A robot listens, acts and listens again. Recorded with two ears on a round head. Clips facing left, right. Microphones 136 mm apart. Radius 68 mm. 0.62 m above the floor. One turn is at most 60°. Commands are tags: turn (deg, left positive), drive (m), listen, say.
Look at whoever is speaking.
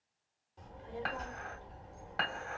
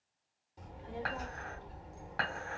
<turn deg="-30"/>
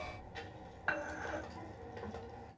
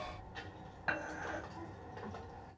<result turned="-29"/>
<turn deg="15"/>
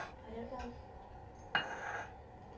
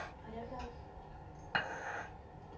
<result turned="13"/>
<say>Facing the child speaking, 1 to 2 m away.</say>